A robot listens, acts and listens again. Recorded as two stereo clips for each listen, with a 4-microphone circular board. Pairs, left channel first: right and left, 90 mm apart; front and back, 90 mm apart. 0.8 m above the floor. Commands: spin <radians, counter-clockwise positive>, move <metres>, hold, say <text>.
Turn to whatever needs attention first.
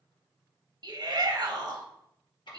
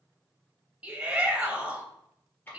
spin 1.83
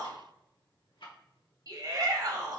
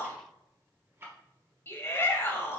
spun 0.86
spin 0.96
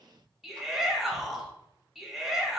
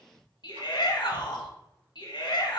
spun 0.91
say Found it: a shout, straight ahead.